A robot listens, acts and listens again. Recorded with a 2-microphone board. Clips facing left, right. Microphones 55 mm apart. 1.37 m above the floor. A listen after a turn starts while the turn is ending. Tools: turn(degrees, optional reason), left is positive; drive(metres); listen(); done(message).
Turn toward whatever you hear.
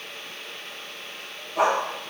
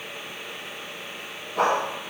turn(degrees=30)
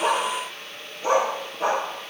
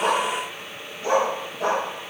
turn(degrees=155, reason="So it is at 155° left.")
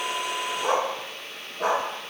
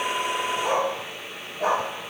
turn(degrees=70, reason="The dog barking is now 70° left.")
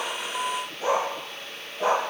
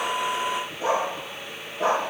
turn(degrees=-15, reason="The dog barking is now 15° right.")
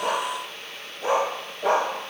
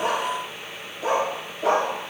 done("Found it: a dog barking, straight ahead, over 4 m away.")